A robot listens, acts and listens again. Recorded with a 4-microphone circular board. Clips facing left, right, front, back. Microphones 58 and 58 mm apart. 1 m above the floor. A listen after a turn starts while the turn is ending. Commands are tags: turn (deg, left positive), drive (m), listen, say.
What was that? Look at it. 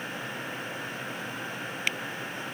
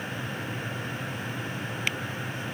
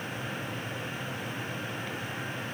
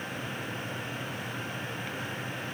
<listen/>
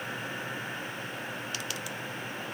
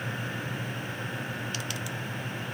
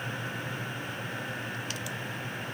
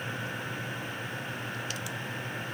<listen/>
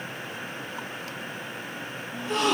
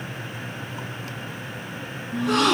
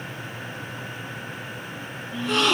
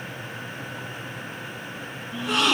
<turn deg="-100"/>
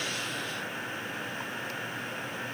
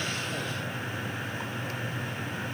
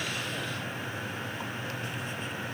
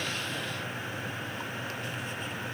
<say>I heard a gasp from this way, but can't make it out now.</say>